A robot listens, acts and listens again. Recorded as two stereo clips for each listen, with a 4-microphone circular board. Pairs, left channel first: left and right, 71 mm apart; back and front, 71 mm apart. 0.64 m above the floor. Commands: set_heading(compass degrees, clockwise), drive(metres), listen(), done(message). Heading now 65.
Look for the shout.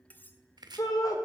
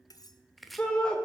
set_heading(320)
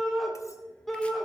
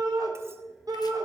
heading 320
done("Facing the shout, 2 to 4 m away.")